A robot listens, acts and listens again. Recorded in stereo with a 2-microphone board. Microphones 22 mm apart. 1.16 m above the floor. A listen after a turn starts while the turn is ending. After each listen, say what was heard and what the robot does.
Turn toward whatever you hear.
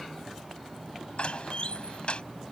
The door slam: about 50° left or 130° left. Turn 50° left.
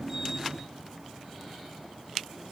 Keep listening.
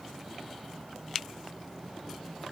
I heard a door slam, but can't make it out now. It was about straight ahead or 80° left.